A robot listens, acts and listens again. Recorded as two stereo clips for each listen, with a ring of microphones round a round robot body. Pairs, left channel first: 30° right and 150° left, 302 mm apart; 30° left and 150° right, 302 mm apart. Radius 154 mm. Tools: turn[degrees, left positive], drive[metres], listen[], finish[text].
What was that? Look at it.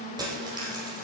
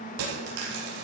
Thought: The dropped coin: 135° right.
Action: turn[-135]
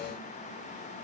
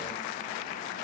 Action: finish[Facing where the dropped coin came from. I can't hear it now.]